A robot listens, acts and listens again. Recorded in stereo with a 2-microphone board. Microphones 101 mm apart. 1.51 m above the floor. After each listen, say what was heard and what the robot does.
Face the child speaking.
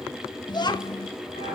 The child speaking: about 45° left or 135° left. Turn 45° left.
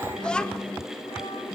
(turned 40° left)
So it is at 10° left. Turn 10° left.
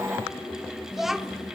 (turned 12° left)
Facing the child speaking.